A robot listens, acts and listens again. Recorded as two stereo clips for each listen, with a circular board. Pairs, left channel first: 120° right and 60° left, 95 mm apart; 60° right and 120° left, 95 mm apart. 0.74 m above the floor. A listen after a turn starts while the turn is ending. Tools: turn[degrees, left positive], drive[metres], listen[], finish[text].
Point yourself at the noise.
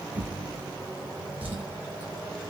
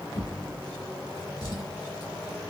Thought: The drawer: 10° right.
Action: turn[-10]
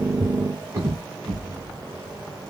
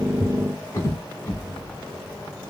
Action: finish[Facing the drawer.]